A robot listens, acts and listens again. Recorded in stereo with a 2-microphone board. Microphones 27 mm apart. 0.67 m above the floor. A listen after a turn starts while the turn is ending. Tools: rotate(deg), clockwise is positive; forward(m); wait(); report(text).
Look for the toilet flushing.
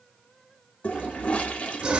rotate(-60)
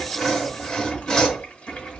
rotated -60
wait()
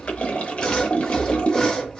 rotate(-55)
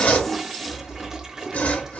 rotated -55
rotate(20)
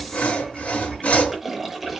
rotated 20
report("Facing the toilet flushing, under 1 m away.")